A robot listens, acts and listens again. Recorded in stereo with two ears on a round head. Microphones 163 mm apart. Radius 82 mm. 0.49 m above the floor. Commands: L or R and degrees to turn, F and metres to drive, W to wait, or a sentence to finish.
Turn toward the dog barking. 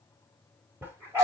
R30
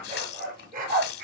R130
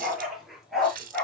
Facing the dog barking, 2 to 4 m away.